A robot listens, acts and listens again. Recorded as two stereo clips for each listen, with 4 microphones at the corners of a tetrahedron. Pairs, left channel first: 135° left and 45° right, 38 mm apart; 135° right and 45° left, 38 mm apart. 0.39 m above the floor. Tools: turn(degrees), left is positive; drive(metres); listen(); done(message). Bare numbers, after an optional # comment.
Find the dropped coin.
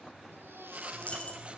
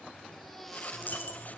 # The dropped coin: 175° right.
turn(-175)
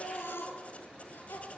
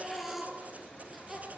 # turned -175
done("Facing where the dropped coin came from. I can't hear it now.")